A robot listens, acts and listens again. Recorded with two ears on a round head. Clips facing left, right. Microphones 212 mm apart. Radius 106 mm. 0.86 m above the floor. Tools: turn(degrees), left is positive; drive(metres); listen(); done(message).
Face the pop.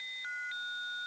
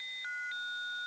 listen()
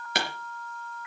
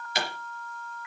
turn(degrees=45)
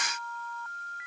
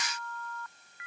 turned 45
listen()
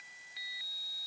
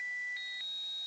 done("I heard a pop, but can't make it out now. It was about straight ahead or 90° left.")